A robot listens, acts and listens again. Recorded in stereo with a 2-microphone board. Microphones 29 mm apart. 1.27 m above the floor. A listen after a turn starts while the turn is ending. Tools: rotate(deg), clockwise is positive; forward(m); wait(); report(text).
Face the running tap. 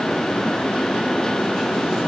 wait()
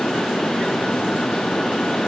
wait()
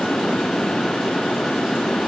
report("I can't make out a running tap to turn to.")